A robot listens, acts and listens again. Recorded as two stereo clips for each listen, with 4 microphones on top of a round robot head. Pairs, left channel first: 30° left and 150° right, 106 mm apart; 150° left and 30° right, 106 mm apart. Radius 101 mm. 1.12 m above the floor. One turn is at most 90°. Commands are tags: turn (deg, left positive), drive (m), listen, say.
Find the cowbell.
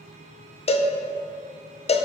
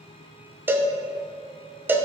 <turn deg="40"/>
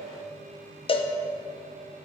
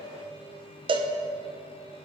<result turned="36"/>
<say>Facing the cowbell.</say>